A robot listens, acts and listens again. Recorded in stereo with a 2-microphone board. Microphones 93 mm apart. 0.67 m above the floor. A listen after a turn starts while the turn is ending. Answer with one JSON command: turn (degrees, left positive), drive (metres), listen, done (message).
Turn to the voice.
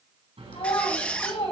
{"turn": 65}
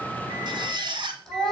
{"done": "Found it: a child speaking, straight ahead."}